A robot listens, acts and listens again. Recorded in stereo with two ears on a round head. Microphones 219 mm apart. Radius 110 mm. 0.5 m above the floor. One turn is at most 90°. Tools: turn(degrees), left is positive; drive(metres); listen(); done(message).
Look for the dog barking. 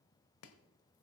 listen()
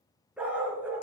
turn(degrees=-30)
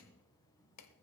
listen()
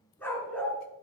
turn(degrees=30)
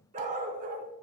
turn(degrees=-40)
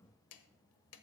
listen()
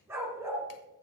turn(degrees=-10)
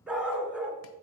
done("Facing the dog barking.")